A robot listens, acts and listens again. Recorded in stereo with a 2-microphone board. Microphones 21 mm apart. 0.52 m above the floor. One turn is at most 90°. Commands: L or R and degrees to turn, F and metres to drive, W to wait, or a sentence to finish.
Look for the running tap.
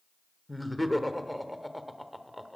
W
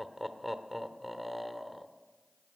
W
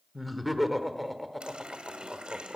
R55
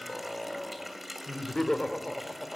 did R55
Found it: a running tap, straight ahead.